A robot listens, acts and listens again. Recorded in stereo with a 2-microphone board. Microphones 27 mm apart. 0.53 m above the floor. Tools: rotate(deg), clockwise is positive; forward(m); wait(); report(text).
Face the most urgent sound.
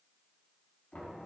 wait()
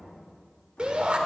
rotate(40)
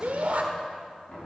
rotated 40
rotate(95)
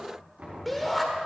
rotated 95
report("Facing the shout.")